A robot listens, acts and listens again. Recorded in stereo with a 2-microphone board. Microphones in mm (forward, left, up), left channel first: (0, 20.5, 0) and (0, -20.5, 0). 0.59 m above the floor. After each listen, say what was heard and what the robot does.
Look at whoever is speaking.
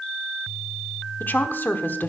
The woman speaking: about 50° left or 130° left. Turn 50° left.
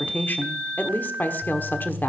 So it is at 65° left. Turn 65° left.
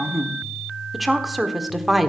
Facing the woman speaking, 1 to 2 m away.